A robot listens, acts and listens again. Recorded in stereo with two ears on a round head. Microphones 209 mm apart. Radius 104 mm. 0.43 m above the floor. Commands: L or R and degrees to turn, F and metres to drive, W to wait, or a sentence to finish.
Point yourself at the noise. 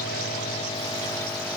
W
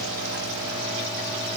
W
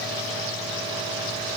I can't make out anything.